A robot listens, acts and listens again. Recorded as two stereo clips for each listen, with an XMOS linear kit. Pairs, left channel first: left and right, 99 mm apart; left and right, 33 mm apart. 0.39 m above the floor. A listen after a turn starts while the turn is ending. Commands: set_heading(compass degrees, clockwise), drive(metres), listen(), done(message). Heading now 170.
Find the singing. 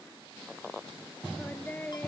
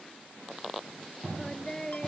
set_heading(155)
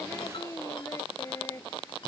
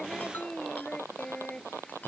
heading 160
set_heading(10)
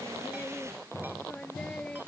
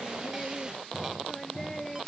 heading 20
set_heading(10)
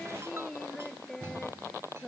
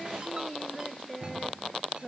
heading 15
done("Found it: singing, straight ahead.")